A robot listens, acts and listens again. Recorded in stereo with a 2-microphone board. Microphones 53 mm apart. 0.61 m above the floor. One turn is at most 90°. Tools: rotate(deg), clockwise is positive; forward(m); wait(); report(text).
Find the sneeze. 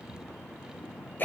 wait()
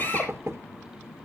wait()
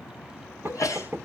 rotate(-75)
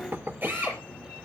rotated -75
wait()
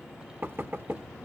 report("I heard a sneeze, but can't make it out now. It was about straight ahead or 30° left.")